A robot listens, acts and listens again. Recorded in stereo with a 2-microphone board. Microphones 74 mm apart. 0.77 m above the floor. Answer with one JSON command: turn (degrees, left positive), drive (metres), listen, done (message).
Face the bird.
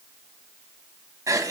{"listen": true}
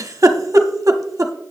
{"listen": true}
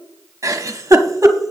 {"done": "I can't make out a bird to turn to."}